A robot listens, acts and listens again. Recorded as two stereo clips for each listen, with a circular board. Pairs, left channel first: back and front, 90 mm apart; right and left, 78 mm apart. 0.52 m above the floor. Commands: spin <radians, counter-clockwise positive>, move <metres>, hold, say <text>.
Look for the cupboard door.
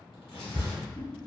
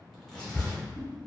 spin -0.26
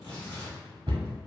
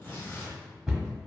say Facing the cupboard door.